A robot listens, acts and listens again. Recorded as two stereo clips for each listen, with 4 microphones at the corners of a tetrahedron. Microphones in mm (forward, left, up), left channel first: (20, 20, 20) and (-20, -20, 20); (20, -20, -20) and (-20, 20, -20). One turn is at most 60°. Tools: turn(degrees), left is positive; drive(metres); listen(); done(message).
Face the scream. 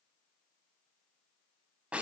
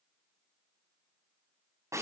listen()
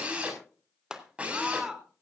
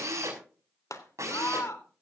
turn(degrees=-60)
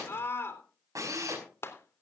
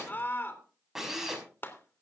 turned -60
done("Facing the scream.")